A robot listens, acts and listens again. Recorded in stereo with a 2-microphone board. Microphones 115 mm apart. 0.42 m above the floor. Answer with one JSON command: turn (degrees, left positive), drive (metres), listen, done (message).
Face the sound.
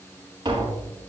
{"turn": -35}
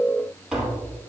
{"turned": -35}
{"done": "Facing the tapping, over 4 m away."}